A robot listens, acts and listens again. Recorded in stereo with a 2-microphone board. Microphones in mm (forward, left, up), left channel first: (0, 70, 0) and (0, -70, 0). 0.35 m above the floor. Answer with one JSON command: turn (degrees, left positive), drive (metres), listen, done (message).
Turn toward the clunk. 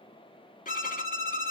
{"listen": true}
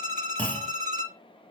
{"turn": 30}
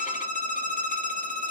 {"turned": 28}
{"listen": true}
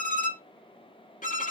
{"done": "I heard a clunk, but can't make it out now. It was about 15° right or 140° left."}